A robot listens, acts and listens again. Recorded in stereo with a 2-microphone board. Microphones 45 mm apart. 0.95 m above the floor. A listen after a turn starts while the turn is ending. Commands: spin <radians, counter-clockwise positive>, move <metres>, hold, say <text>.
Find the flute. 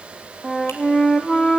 spin 0.52
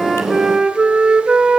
spin -0.26
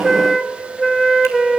say Found it: a flute, straight ahead.